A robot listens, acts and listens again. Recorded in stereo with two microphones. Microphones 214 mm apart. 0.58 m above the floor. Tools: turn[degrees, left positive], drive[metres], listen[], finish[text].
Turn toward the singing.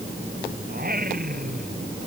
Thought: The singing: about 40° right or 140° right.
Action: turn[-40]
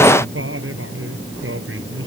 Thought: So it is at 105° right.
Action: turn[-105]
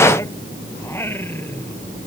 Thought: The singing is now 10° left.
Action: turn[10]
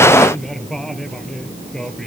Action: finish[Found it: singing, straight ahead.]